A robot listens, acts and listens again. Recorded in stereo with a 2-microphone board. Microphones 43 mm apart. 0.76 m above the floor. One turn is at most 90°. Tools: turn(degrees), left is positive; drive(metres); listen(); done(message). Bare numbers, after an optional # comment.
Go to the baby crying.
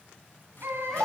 # The baby crying: about 70° right or 110° right.
turn(-70)
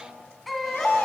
drive(1.0)
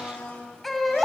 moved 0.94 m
drive(1.0)
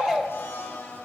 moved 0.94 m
# The baby crying is now 10° left.
turn(10)
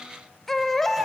drive(1.0)
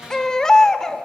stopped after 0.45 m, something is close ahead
# The baby crying is now 15° left.
turn(15)
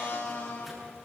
listen()
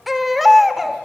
done("I am next to the baby crying.")